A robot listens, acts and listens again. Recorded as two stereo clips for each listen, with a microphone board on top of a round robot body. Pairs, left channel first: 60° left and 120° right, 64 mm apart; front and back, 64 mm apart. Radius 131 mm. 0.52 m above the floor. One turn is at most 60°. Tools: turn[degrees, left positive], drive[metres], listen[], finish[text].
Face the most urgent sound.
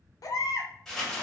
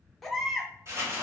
Thought: The baby crying: 85° left.
Action: turn[60]
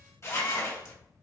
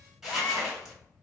Thought: Nothing new. It was at 25° left.
Action: turn[25]
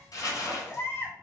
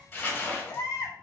Action: finish[Found it: a baby crying, straight ahead, under 1 m away.]